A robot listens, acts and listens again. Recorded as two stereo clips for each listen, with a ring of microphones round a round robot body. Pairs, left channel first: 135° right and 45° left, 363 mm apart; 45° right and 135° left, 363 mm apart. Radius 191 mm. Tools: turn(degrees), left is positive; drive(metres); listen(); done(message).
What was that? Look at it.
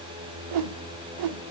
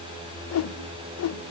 turn(degrees=10)
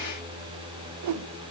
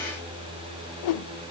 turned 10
done("Found it: a whoosh, straight ahead, under 1 m away.")